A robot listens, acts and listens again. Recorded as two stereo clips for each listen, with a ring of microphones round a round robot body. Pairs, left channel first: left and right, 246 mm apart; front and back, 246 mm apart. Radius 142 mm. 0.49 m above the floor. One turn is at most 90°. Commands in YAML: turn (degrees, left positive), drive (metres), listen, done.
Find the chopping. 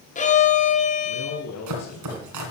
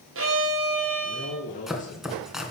turn: -90
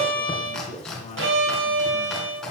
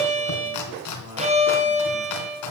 done: "Found it: chopping, straight ahead."